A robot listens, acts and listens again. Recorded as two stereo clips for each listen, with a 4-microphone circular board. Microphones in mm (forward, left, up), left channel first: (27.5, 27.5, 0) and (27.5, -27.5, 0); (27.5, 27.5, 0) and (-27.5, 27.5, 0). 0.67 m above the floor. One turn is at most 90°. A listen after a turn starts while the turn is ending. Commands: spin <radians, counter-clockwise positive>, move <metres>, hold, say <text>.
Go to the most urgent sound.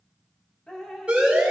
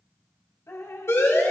spin -0.35
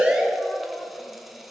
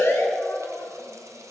spin -0.17
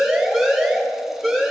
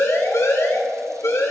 move 1.0
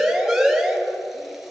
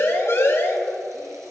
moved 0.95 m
move 1.0
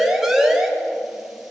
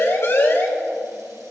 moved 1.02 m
spin -0.17
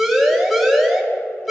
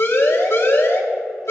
move 1.0
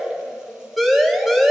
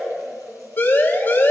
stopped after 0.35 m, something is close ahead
say I am next to the siren.